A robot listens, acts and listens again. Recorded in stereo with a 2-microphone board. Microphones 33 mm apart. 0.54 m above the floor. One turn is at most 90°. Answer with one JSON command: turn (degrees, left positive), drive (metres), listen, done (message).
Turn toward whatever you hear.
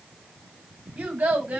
{"turn": -60}
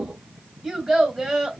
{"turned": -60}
{"turn": -15}
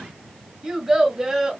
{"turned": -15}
{"turn": -15}
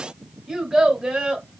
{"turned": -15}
{"turn": -25}
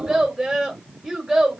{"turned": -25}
{"turn": -10}
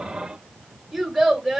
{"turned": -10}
{"done": "Found it: a child speaking, straight ahead, 1 to 2 m away."}